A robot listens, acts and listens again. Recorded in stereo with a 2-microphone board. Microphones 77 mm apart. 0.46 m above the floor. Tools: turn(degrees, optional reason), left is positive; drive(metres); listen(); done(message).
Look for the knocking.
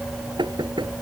turn(degrees=-90)
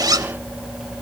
listen()
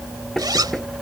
done("Facing the knocking.")